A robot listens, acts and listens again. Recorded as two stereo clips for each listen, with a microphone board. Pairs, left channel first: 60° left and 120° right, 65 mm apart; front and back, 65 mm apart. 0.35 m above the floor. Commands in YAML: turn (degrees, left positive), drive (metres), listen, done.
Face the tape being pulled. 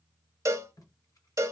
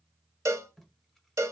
turn: 85
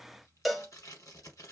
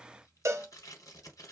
turn: 25
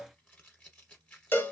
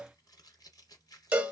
turn: -10
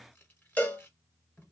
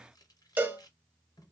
done: "Facing the tape being pulled."